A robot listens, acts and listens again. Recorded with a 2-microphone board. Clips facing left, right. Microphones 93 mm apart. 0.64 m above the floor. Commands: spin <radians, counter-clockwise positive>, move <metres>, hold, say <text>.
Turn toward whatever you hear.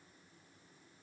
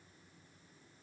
hold
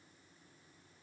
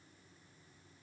hold
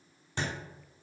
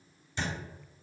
spin 1.05
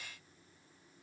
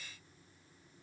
hold
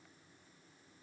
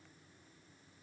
say I heard a thud, but can't make it out now. It was about straight ahead or 60° left.